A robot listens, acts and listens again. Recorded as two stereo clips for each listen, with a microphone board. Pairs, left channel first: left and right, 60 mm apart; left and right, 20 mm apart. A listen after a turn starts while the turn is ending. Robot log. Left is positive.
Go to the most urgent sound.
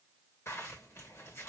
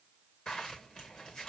cmd idle
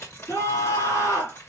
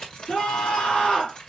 cmd yaw +90
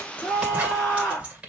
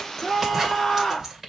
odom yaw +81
note: So it is at 10° left.
cmd yaw +10
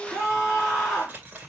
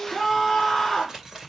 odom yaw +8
cmd fwd 1.0
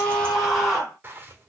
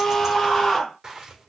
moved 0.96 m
cmd fwd 1.0
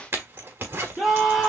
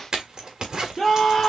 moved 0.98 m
cmd fwd 1.0
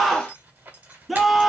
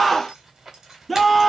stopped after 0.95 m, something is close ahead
end: I am next to the scream.